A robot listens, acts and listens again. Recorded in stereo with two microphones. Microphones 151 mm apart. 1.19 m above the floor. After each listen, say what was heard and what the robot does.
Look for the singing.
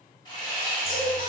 The singing: about 60° left or 120° left. Turn 60° left.
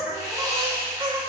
So it is at 35° right. Turn 35° right.
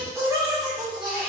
The singing is now 30° right. Turn 30° right.
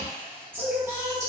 The singing is now 20° right. Turn 20° right.
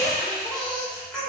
Facing the singing.